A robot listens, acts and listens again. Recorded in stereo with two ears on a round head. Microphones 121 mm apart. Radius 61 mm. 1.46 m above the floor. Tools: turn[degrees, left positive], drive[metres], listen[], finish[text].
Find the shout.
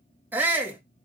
Action: turn[-30]
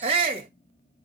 Thought: So it is at 135° right.
Action: turn[-135]
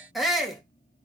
Action: finish[Facing the shout, 2 to 4 m away.]